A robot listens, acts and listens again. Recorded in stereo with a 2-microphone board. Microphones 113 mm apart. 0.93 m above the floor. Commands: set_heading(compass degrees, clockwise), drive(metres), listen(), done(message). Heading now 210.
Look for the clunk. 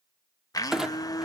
set_heading(240)
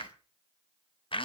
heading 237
listen()
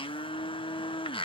done("I heard a clunk, but can't make it out now. It was about 20° left or 150° right.")